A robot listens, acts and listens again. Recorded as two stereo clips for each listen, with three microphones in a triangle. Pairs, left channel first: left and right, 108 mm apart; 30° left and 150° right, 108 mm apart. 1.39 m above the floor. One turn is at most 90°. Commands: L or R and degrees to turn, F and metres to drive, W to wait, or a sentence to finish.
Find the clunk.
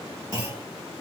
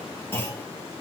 R30
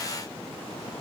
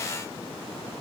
I heard a clunk from this way, but can't make it out now.